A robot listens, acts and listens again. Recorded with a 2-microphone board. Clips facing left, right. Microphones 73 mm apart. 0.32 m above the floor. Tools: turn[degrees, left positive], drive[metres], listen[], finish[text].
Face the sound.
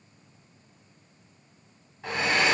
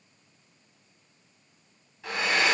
Thought: The hair dryer: about 35° left or 145° left.
Action: turn[35]
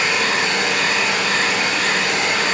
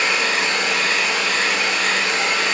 Thought: So it is at 105° left.
Action: turn[105]
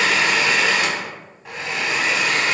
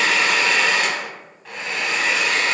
Action: finish[Facing the hair dryer.]